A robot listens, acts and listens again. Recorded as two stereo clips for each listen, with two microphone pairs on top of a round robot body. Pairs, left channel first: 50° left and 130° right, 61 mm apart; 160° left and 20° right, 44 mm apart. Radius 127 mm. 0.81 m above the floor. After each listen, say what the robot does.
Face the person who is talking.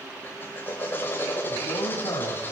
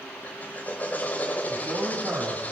Turn 25° left.
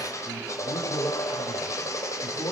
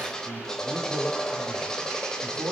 Facing the man speaking, over 4 m away.